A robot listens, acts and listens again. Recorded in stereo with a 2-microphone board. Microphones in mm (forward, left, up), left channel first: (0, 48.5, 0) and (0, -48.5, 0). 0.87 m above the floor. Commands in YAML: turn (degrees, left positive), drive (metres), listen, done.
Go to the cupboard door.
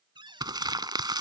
turn: -55
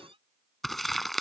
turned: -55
turn: -75
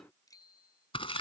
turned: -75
listen: true
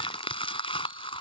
listen: true
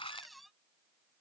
drive: 1.0
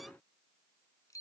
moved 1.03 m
listen: true
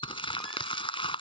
listen: true
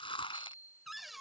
drive: 1.0
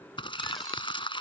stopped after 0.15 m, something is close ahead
listen: true
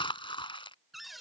done: "I am next to the cupboard door."